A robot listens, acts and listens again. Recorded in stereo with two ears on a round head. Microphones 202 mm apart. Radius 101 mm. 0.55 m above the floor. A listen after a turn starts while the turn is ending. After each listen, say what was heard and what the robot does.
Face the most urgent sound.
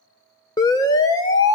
The siren: about 15° left or 165° left. Turn 15° left.
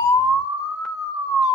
Facing the siren, 2 to 4 m away.